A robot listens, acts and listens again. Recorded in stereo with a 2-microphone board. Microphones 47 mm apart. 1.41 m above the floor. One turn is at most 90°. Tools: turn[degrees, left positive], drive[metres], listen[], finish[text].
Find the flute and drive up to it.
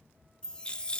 Action: listen[]
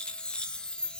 Action: listen[]
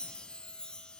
Action: finish[I can't make out a flute to turn to.]